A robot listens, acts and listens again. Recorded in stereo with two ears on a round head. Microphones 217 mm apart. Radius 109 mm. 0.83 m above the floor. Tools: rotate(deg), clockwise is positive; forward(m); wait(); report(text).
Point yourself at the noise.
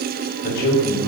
rotate(-90)
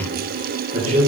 rotate(35)
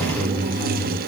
rotate(20)
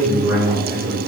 rotate(15)
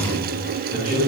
report("Found it: a man speaking, straight ahead, 2 to 4 m away.")